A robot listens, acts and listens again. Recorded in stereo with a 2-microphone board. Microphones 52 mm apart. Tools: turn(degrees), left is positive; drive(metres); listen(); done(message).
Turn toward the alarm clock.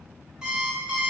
turn(degrees=-30)
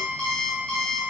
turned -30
turn(degrees=15)
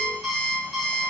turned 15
done("Facing the alarm clock, 1 to 2 m away.")